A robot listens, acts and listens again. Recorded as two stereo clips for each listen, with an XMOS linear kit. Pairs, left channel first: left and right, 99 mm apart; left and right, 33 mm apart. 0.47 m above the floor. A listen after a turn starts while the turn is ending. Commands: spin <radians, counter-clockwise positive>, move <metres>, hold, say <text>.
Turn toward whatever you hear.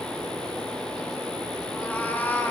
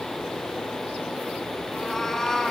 spin 0.35
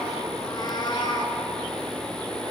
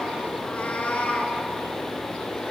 spin 2.36
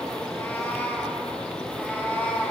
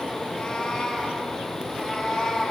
spin 0.26
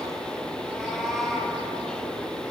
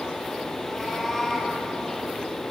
say Found it: a cat meowing, straight ahead, over 4 m away.